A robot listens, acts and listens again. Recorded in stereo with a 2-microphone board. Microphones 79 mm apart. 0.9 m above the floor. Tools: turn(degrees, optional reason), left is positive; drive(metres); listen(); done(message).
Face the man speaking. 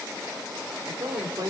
turn(degrees=-50, reason="The man speaking: about 50° right or 130° right.")
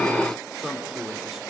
done("Facing the man speaking, 2 to 4 m away.")